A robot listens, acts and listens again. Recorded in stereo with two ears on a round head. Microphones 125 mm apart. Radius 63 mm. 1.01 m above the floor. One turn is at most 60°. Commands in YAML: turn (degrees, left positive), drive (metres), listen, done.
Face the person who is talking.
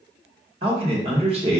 turn: -45
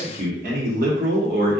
turn: -60
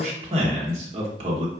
turn: -50
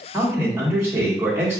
turn: -20
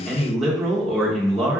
done: "Facing the man speaking."